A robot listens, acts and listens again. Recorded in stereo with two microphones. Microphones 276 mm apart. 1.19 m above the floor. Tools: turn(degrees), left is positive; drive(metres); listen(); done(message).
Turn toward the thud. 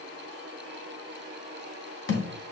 turn(degrees=45)
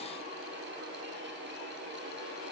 listen()
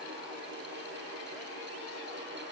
done("I heard a thud, but can't make it out now. It was about straight ahead or 90° left.")